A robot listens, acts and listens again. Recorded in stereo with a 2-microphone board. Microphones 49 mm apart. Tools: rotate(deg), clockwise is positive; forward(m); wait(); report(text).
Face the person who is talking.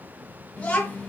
rotate(-25)
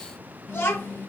rotate(-125)
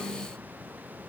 rotate(10)
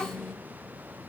report("Found it: a child speaking, straight ahead, under 1 m away.")